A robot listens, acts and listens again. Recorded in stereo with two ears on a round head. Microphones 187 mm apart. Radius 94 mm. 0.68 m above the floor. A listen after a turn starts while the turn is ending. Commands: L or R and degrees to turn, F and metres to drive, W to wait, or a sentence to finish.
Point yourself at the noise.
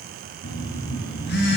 L55
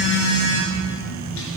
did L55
L70
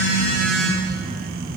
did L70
Facing the phone buzzing.